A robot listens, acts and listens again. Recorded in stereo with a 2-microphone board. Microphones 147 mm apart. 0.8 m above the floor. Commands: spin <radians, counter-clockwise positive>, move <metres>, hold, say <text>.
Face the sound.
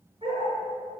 spin -0.61
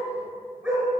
say Found it: a dog barking, straight ahead.